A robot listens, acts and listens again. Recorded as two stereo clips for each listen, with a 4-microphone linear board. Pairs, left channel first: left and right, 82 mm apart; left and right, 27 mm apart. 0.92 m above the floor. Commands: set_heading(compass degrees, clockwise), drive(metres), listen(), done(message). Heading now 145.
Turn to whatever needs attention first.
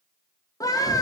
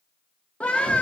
set_heading(100)
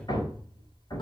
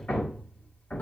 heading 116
listen()
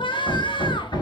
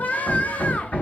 set_heading(11)
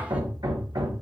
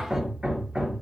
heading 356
set_heading(11)
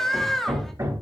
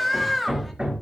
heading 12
done("Found it: a scream, straight ahead.")